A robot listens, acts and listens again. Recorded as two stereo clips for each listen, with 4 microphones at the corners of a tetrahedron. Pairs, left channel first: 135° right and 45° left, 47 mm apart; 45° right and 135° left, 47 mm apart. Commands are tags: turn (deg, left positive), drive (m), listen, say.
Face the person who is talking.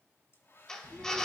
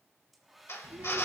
<turn deg="125"/>
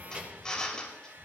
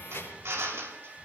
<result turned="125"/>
<turn deg="-15"/>
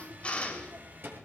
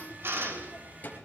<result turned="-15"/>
<turn deg="10"/>
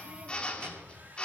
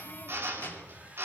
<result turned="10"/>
<turn deg="10"/>
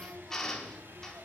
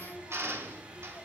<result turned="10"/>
<say>Found it: a child speaking, straight ahead.</say>